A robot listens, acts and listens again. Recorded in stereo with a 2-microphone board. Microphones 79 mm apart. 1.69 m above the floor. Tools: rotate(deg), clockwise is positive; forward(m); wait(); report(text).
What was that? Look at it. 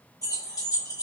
rotate(-50)
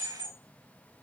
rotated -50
rotate(-50)
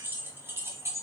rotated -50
rotate(35)
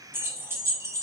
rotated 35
rotate(40)
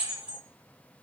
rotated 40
rotate(15)
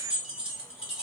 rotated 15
rotate(10)
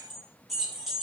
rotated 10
report("Facing the keys jangling.")